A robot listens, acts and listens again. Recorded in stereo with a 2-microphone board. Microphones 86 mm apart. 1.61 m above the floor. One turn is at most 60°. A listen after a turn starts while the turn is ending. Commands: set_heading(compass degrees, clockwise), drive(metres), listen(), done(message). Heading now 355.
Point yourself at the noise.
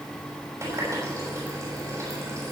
set_heading(35)
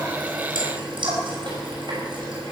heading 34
set_heading(94)
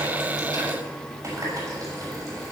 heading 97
set_heading(132)
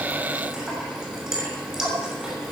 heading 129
done("Found it: a running tap, straight ahead.")